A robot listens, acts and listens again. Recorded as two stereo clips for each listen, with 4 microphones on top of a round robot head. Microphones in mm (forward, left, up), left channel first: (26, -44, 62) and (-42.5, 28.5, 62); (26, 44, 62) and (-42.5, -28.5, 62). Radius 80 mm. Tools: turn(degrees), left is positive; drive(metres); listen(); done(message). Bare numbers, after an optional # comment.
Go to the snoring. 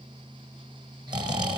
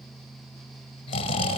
# The snoring: 85° left.
turn(85)
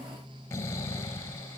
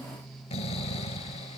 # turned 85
# The snoring is now 20° left.
turn(20)
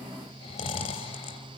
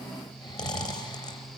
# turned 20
drive(1.0)
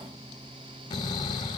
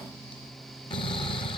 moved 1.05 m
drive(1.0)
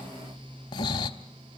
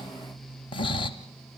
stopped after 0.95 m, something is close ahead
done("Arrived at the snoring, straight ahead.")